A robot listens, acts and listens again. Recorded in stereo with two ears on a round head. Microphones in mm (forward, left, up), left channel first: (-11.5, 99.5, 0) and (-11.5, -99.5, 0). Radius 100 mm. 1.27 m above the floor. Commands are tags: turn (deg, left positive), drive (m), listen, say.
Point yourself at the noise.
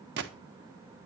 <turn deg="-55"/>
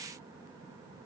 <listen/>
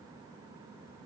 <say>I heard a gunshot, but can't make it out now. It was about straight ahead or 70° right.</say>